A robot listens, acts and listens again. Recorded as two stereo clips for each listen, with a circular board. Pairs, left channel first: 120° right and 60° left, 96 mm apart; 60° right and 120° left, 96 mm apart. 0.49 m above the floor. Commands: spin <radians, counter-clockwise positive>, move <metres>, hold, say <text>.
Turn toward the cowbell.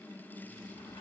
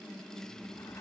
hold
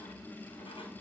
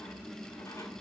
hold
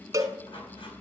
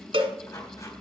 spin 1.92
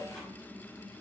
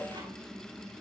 hold
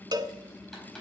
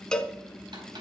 spin 0.35
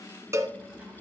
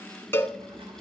say Facing the cowbell.